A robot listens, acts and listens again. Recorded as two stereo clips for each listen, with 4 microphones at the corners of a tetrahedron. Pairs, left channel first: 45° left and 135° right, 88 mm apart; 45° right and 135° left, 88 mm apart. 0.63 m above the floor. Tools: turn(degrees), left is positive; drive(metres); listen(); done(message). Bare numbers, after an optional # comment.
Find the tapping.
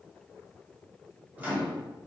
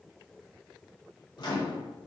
listen()
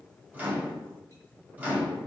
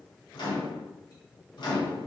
listen()
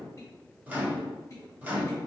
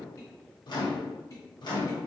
done("I can't make out tapping to turn to.")